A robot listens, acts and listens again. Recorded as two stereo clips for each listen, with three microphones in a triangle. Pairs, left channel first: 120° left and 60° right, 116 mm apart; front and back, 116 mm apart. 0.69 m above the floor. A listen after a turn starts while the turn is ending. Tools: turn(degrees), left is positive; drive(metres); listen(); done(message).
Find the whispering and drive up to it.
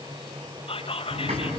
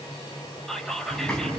turn(degrees=85)
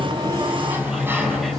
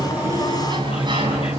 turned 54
turn(degrees=30)
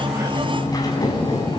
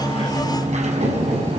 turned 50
turn(degrees=-20)
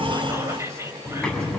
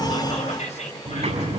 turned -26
drive(metres=1.0)
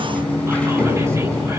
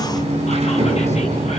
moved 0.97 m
listen()
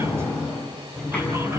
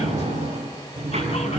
listen()
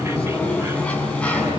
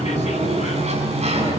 done("Facing where the whispering came from. I can't hear it now. I did not reach it.")